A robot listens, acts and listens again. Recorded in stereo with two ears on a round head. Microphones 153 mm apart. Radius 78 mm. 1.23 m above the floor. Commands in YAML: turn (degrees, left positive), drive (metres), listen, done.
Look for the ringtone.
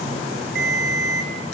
turn: -65
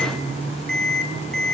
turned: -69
done: "Found it: a ringtone, straight ahead."